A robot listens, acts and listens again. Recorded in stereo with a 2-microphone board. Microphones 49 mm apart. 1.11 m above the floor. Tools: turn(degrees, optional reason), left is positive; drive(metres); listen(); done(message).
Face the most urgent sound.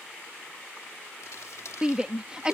turn(degrees=-20, reason="The shout: about 20° right or 160° right.")
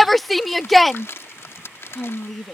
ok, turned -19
done("Found it: a shout, straight ahead.")